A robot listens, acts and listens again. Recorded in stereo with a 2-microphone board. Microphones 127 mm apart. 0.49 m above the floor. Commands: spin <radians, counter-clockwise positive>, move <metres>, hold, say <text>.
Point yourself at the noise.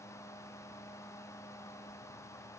hold
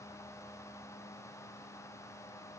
hold
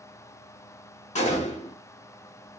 spin 1.22
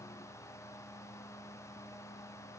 hold
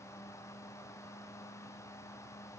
say I heard a gunshot, but can't make it out now. It was about straight ahead or 40° left.